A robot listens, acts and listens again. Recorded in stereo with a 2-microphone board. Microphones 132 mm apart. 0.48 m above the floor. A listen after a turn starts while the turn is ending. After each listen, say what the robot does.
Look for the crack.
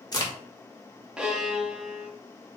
Turn 30° left.
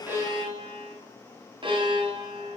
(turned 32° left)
Keep listening.
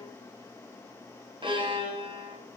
I heard a crack, but can't make it out now. It was about straight ahead or 115° left.